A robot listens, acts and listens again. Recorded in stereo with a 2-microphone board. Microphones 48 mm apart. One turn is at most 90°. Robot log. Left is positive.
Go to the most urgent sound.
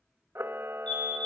note: The fire alarm: about 30° left or 150° left.
cmd yaw +30
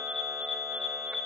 cmd fwd 1.0
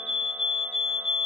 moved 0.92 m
cmd fwd 1.0
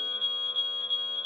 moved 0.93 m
note: The fire alarm is now 10° right.
cmd yaw -10
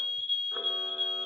cmd fwd 1.0
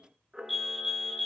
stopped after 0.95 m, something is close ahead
end: Arrived at the fire alarm, straight ahead.